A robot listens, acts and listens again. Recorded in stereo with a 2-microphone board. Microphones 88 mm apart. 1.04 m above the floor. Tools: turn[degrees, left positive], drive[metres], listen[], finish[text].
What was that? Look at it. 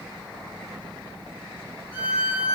Thought: The violin: about 75° left or 105° left.
Action: turn[75]
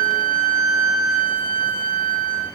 Thought: So it is at 25° left.
Action: turn[25]
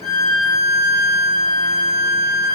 Action: finish[Found it: a violin, straight ahead, 2 to 4 m away.]